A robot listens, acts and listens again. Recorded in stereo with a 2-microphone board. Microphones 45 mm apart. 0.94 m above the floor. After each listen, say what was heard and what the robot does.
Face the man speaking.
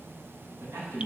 Turn 90° right.
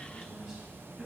Keep listening.
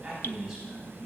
The man speaking is now 15° right. Turn 15° right.
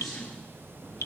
Found it: a man speaking, straight ahead.